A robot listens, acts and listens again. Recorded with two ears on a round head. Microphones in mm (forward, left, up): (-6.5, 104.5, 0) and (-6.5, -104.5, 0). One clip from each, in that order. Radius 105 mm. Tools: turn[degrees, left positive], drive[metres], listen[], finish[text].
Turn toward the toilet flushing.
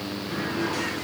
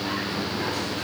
Action: listen[]
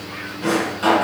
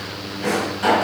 Action: listen[]
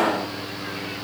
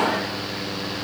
Action: finish[I can't make out a toilet flushing, only a drawer.]